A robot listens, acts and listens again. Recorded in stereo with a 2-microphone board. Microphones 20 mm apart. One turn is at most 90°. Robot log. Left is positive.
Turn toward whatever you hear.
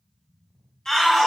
note: The shout: about 25° left or 155° left.
cmd yaw +25
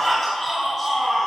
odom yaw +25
end: Found it: a shout, straight ahead.